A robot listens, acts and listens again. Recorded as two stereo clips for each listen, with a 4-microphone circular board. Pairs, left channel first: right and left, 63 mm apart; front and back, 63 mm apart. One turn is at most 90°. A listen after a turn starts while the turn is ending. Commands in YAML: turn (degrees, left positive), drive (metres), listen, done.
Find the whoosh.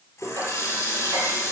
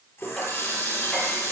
listen: true
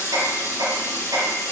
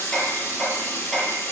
listen: true
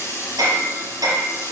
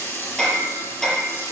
done: "I can't make out a whoosh to turn to."